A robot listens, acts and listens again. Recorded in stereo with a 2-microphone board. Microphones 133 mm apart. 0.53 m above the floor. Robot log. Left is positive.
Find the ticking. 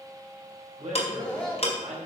note: The ticking: about 50° left or 130° left.
cmd yaw +50
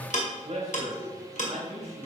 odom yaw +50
note: So it is at 75° left.
cmd yaw +75
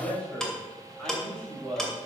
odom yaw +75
end: Facing the ticking.